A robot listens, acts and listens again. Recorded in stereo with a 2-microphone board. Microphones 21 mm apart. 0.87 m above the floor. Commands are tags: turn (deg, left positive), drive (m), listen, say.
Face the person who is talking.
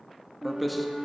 <turn deg="30"/>
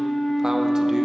<listen/>
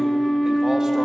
<listen/>
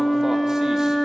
<say>I heard a man speaking, but can't make it out now. It was about 30° right or 150° left.</say>